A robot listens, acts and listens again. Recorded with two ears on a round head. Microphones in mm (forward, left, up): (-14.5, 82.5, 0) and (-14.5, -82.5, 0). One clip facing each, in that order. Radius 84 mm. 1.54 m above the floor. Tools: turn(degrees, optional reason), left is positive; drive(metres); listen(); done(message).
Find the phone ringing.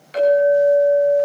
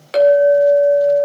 listen()
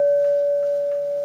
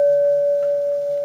listen()
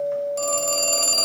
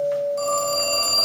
turn(degrees=40, reason="The phone ringing: about 40° left or 140° left.")
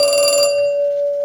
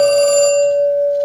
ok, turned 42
turn(degrees=95, reason="So it is at 95° left.")
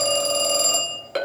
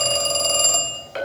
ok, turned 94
done("Found it: a phone ringing, straight ahead.")